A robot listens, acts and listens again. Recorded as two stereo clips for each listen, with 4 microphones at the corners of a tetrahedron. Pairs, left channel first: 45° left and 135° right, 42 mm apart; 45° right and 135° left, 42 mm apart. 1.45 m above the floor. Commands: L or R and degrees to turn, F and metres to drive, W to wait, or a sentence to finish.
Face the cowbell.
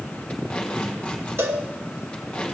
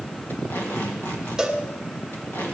R150
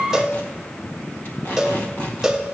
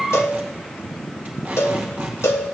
R55
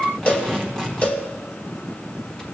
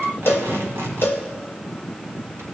R10
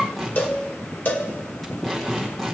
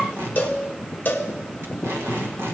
Facing the cowbell, under 1 m away.